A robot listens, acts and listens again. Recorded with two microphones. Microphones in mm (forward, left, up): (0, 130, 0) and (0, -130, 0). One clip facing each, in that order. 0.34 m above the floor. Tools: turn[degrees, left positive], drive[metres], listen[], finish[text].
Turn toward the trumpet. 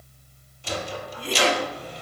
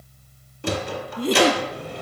Action: listen[]
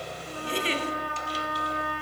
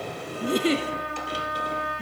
Thought: The trumpet: about 25° right or 155° right.
Action: turn[-25]
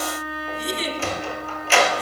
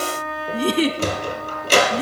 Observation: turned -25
Action: finish[Facing the trumpet, 2 to 4 m away.]